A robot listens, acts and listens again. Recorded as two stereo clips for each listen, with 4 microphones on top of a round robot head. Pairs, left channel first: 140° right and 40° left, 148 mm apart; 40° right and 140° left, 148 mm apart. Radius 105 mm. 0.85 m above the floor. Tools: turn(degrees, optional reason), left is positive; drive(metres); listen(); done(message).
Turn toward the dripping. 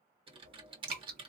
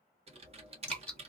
turn(degrees=40, reason="The dripping: 40° left.")
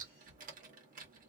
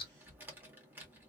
turn(degrees=10, reason="The dripping is now 10° left.")
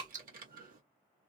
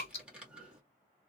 done("Facing the dripping, 1 to 2 m away.")